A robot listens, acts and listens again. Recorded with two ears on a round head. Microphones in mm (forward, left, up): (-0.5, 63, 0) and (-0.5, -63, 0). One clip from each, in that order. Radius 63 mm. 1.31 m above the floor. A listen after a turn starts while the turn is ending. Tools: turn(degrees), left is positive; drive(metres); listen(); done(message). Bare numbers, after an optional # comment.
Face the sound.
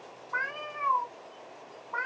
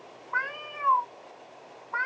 # The cat meowing: about 25° right or 155° right.
turn(-25)
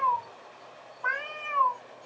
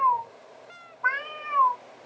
# So it is at 125° right.
turn(-125)
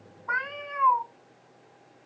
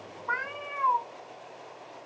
# The cat meowing is now 30° left.
turn(30)
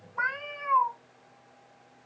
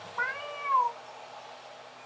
done("Found it: a cat meowing, straight ahead, 2 to 4 m away.")